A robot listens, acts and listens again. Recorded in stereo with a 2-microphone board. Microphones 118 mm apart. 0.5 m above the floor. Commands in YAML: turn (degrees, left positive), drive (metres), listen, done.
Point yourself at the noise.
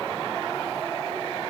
listen: true
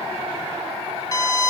turn: 30
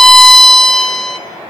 done: "Found it: a violin, straight ahead."